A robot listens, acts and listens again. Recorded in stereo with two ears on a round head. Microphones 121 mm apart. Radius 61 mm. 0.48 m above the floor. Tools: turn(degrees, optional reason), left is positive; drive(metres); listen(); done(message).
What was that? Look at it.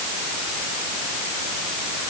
listen()
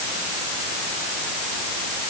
listen()
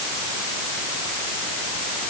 done("I can't make out anything.")